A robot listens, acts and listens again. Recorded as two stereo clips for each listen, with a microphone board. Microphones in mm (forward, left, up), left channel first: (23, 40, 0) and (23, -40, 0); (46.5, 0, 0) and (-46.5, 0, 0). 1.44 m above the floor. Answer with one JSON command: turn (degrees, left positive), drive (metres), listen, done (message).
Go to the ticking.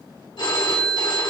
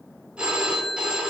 {"listen": true}
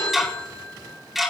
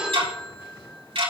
{"turn": -175}
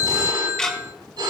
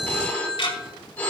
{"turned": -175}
{"turn": 10}
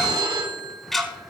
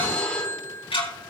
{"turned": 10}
{"drive": 1.0}
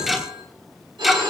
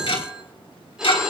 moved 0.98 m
{"drive": 1.0}
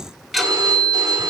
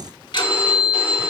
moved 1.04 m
{"drive": 1.0}
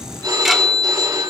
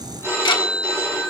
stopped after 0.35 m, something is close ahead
{"done": "Arrived at the ticking, straight ahead."}